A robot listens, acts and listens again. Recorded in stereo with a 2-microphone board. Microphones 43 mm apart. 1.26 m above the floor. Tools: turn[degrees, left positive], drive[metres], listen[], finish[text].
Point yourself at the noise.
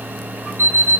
Thought: The alarm clock: about 65° left or 115° left.
Action: turn[65]
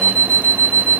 Thought: So it is at 40° left.
Action: turn[40]
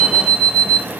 Thought: The alarm clock is now 10° left.
Action: turn[10]
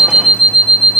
Action: finish[Facing the alarm clock, 2 to 4 m away.]